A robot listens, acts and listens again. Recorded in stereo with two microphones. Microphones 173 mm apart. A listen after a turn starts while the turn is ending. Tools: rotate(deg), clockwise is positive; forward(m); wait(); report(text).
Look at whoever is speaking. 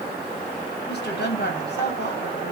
rotate(-90)
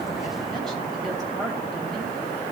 report("Facing the woman speaking, 2 to 4 m away.")